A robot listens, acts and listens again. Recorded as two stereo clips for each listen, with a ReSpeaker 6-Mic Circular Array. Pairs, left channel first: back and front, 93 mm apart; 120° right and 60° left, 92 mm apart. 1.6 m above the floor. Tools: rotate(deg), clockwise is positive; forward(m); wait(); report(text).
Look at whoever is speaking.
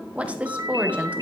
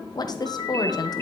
rotate(75)
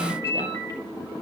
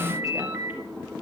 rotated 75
wait()
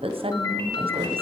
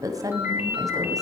rotate(-10)
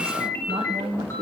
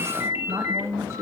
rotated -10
report("Found it: a woman speaking, straight ahead, 1 to 2 m away.")